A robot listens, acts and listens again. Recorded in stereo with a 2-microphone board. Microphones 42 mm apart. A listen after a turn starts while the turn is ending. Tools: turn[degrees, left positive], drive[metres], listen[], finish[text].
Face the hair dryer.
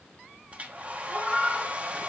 Thought: The hair dryer: about 30° right or 150° right.
Action: turn[-30]
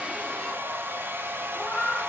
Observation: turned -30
Thought: So it is at 115° right.
Action: turn[-115]
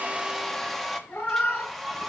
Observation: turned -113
Action: finish[Found it: a hair dryer, straight ahead.]